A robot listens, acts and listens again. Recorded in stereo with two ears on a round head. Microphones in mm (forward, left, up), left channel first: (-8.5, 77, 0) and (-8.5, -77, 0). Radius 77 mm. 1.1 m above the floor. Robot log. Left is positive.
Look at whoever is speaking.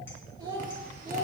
note: The child speaking: about 20° right or 160° right.
cmd yaw -20
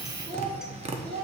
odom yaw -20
note: The child speaking: about 20° right or 160° right.
cmd yaw -20
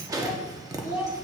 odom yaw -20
cmd yaw -30
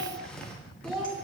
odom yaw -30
cmd yaw -30
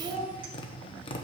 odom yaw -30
note: The child speaking: about 20° right or 160° right.
cmd yaw -20
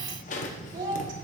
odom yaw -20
note: So it is at 140° right.
cmd yaw -140
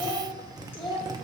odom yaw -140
note: The child speaking is now 10° left.
cmd yaw +10
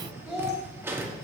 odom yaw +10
end: Found it: a child speaking, straight ahead.